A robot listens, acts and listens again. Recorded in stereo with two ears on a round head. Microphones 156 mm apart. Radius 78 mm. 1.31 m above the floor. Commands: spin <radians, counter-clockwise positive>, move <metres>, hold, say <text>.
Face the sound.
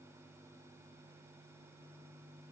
hold
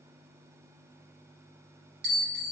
spin -0.96
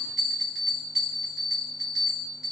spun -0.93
say Found it: a bell, straight ahead.